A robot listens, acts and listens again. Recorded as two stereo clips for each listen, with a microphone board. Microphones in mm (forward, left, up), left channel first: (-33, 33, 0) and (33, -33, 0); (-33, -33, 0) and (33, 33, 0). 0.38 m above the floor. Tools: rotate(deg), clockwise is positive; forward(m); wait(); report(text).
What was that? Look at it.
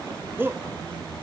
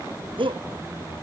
rotate(-20)
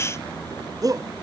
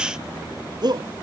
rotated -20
report("Found it: a shout, straight ahead.")